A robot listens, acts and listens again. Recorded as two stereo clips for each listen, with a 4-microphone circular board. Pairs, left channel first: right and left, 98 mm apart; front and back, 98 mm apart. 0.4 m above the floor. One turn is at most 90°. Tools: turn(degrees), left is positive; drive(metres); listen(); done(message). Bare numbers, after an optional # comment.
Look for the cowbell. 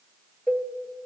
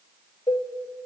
# The cowbell: 10° right.
turn(-10)
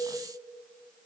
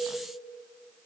listen()
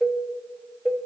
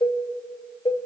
done("Found it: a cowbell, straight ahead.")